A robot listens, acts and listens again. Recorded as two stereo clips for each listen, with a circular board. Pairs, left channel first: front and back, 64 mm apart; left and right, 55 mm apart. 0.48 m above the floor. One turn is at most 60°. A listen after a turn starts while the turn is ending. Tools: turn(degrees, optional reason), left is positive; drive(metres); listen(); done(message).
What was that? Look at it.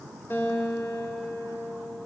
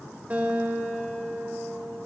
turn(degrees=-40, reason="The guitar: 40° right.")
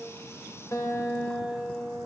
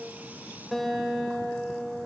done("Facing the guitar, 1 to 2 m away.")